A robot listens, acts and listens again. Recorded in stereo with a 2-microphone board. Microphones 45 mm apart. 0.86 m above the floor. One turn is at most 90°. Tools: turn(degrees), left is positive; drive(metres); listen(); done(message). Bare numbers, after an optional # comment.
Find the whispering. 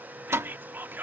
# The whispering: about 50° right or 130° right.
turn(-50)
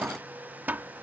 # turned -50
listen()
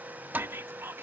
# So it is at 75° right.
turn(-75)
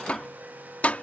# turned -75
listen()
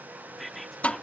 done("Facing the whispering.")